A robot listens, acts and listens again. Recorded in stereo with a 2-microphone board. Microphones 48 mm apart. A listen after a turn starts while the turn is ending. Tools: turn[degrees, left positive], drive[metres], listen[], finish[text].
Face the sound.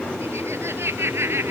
Thought: The laughter: about 60° right or 120° right.
Action: turn[-60]
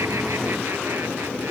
Action: listen[]
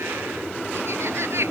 Thought: So it is at 65° right.
Action: turn[-65]
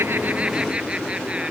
Action: listen[]
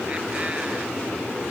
Action: listen[]
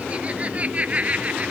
Thought: The laughter is now 30° right.
Action: turn[-30]
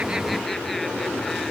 Action: listen[]
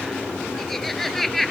Action: finish[Found it: laughter, straight ahead.]